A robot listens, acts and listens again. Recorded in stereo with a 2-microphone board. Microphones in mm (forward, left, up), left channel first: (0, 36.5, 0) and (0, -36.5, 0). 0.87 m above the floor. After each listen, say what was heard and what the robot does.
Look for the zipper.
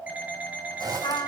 The zipper: about 60° right or 120° right. Turn 60° right.
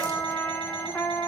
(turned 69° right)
Keep listening.
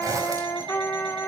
So it is at 50° right. Turn 50° right.
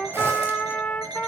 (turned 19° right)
Nothing new. It was at 30° right. Turn 30° right.
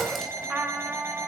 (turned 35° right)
Keep listening.
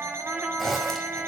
Found it: a zipper, straight ahead.